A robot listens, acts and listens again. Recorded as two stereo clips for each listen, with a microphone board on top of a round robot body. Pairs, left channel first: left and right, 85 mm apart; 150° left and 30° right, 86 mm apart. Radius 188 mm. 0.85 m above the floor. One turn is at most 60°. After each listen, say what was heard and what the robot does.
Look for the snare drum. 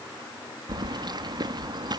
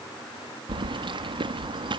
Keep listening.
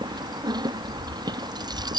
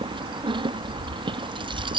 Keep listening.
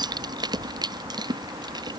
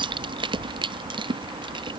I can't make out a snare drum to turn to.